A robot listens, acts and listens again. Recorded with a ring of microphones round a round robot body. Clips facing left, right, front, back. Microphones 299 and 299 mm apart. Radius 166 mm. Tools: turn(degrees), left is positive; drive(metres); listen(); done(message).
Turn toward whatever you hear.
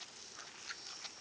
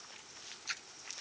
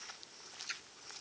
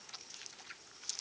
turn(degrees=-45)
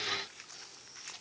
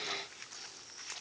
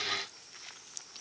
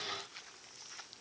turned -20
turn(degrees=-25)
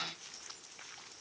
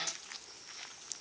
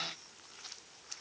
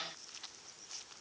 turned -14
turn(degrees=-10)
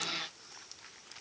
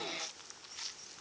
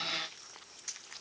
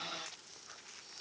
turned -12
done("I heard a splash from this way, but can't make it out now.")